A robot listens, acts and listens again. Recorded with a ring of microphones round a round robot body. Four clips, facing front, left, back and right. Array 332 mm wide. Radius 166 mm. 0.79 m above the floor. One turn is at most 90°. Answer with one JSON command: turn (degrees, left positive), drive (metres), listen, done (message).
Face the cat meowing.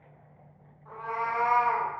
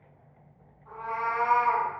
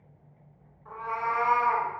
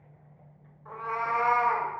{"turn": -90}
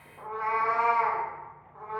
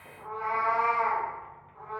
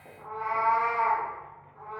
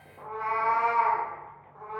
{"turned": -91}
{"turn": -20}
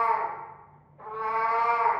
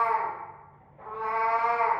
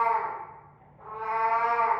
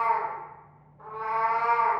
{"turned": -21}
{"done": "Found it: a cat meowing, straight ahead, 1 to 2 m away."}